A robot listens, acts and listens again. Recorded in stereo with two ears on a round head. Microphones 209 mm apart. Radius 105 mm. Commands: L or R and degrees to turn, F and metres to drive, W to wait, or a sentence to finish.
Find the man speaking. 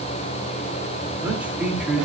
R30
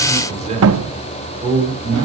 R160
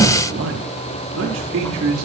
R65
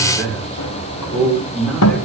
Facing the man speaking.